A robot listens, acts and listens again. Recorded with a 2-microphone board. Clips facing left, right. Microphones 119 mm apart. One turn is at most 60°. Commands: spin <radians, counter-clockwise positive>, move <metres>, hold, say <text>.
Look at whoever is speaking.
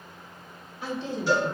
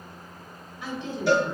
spin 0.61
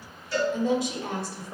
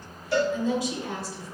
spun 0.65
spin 1.05
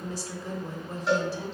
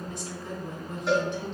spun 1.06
spin 0.79
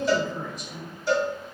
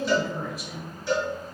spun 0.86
say Found it: a woman speaking, straight ahead, 1 to 2 m away.